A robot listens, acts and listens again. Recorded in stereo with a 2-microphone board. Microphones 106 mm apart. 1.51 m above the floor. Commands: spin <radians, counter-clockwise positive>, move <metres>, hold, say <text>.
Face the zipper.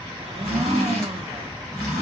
spin 0.52
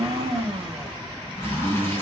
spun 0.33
spin 2.71
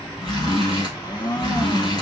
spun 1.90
spin 0.79
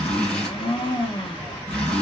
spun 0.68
spin 0.17
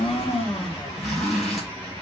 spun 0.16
say Found it: a zipper, straight ahead, 2 to 4 m away.